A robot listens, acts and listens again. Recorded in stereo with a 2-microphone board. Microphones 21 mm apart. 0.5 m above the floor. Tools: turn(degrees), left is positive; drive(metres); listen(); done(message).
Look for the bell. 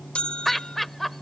turn(degrees=70)
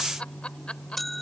turn(degrees=10)
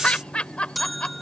done("Facing the bell.")